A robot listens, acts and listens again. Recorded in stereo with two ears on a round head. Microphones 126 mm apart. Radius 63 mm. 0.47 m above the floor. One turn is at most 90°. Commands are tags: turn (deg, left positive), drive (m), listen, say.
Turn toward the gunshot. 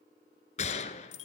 <turn deg="50"/>
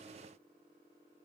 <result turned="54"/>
<listen/>
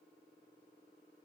<say>I heard a gunshot, but can't make it out now. It was about 5° right or 75° left.</say>